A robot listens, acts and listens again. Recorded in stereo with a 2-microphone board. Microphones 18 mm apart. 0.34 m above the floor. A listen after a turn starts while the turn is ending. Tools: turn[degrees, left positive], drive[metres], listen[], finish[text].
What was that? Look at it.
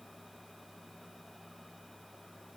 Action: listen[]
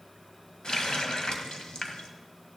Thought: The running tap: about 60° left or 120° left.
Action: turn[60]
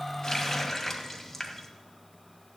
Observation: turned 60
Thought: So it is at 30° left.
Action: turn[30]
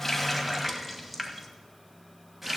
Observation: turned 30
Thought: The running tap is now 10° right.
Action: turn[-10]
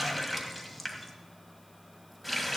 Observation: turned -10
Action: finish[Found it: a running tap, straight ahead, 1 to 2 m away.]